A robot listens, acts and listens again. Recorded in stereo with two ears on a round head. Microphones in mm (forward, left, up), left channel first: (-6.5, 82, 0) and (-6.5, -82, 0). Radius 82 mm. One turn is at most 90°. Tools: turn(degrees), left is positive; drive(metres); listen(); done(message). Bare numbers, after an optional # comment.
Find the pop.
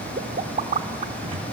# The pop: about 40° right or 140° right.
turn(-40)
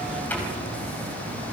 listen()
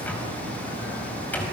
done("I heard a pop, but can't make it out now. It was about straight ahead or 100° right.")